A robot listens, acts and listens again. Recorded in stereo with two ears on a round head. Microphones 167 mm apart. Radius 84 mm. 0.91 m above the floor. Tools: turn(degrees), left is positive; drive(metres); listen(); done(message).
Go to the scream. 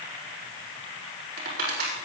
listen()
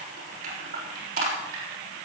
listen()
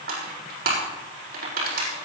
done("I can't make out a scream to turn to.")